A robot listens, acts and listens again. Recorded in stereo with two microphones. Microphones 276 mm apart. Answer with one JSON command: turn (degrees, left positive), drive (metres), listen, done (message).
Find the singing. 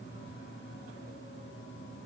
{"listen": true}
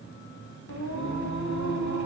{"turn": 90}
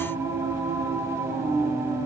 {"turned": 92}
{"turn": -10}
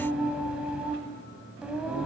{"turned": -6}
{"done": "Facing the singing."}